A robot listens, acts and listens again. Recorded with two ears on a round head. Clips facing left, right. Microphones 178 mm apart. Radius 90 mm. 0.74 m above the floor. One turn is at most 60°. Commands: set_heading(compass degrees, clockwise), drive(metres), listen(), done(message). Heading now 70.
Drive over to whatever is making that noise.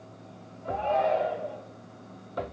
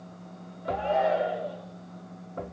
set_heading(100)
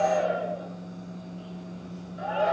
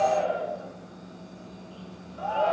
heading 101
set_heading(81)
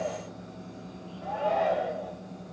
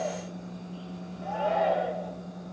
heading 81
drive(1.0)
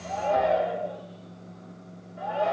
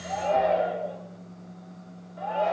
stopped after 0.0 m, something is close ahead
done("Something is in my way. I am facing the shout but have not reached it.")